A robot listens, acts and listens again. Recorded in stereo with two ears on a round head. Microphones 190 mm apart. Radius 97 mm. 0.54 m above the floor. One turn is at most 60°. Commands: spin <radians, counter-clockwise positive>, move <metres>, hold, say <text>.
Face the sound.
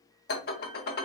spin 0.79
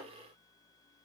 hold
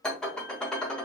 say Found it: dishes clattering, straight ahead.